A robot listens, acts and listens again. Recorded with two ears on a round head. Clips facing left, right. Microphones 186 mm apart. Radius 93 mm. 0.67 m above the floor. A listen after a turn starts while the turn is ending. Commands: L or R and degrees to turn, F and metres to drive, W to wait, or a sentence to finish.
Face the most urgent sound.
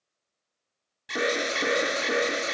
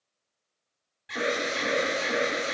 L60
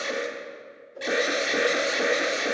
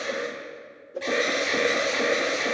L15
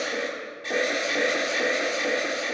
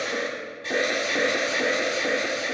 Facing the alarm.